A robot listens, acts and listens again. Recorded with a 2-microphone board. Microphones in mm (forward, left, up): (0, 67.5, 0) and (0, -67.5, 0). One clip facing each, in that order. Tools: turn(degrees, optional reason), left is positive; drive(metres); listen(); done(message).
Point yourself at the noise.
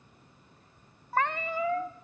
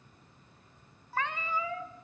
turn(degrees=55, reason="The cat meowing: about 55° left or 125° left.")
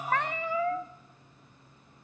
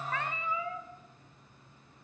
turn(degrees=70, reason="So it is at 70° left.")
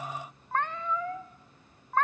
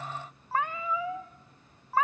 done("Found it: a cat meowing, straight ahead, under 1 m away.")